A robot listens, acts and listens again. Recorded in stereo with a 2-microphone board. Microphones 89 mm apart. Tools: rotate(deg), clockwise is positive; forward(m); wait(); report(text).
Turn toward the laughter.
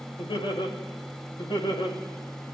rotate(-65)
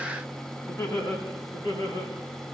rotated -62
rotate(-60)
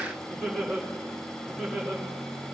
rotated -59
report("Facing the laughter, over 4 m away.")